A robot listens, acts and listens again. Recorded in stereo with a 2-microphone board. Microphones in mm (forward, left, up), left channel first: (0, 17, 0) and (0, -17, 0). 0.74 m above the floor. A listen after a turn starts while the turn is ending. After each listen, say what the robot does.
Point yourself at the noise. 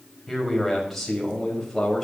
Turn 30° left.
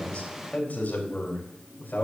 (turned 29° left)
Turn 120° left.
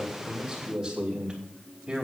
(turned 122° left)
Turn 20° right.
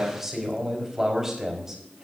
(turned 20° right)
Turn 10° right.
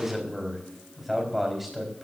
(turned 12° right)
Facing the man speaking, 2 to 4 m away.